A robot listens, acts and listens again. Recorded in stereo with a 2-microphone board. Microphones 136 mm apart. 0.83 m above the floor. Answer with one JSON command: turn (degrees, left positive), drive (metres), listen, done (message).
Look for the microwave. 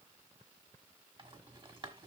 {"listen": true}
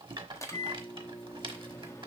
{"turn": 20}
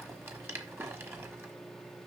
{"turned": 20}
{"done": "Found it: a microwave, straight ahead."}